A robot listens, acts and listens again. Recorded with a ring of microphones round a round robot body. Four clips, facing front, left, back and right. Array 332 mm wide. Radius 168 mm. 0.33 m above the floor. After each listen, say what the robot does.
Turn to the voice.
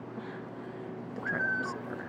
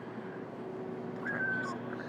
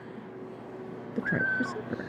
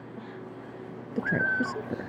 Turn 125° right.
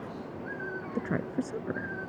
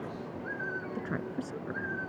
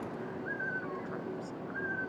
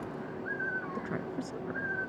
Turn 10° left.
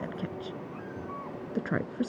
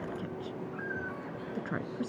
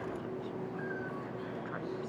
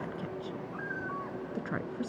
Facing the woman speaking.